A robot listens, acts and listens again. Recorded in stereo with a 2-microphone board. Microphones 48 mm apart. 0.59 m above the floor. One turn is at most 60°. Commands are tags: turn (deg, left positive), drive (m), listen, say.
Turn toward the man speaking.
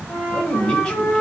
<turn deg="20"/>
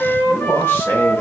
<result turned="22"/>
<turn deg="60"/>
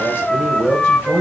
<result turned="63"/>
<turn deg="45"/>
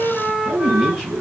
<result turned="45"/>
<say>Facing the man speaking.</say>